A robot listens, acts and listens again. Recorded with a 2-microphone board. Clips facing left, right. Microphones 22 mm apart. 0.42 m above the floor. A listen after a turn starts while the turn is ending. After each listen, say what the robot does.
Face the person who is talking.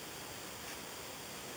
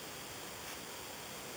Keep listening.
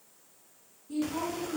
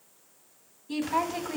Turn 70° right.
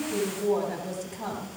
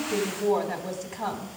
Turn 25° right.
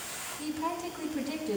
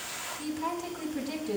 Found it: a woman speaking, straight ahead.